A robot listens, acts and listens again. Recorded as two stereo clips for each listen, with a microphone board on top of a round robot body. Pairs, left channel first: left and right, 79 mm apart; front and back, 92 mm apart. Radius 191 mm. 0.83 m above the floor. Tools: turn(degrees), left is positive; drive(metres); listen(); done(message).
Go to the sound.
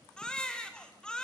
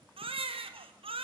turn(degrees=170)
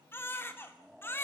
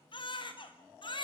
turn(degrees=30)
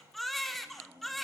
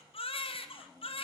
drive(metres=1.0)
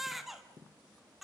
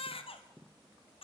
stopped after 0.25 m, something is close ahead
done("Blocked. The baby crying is further on, straight ahead.")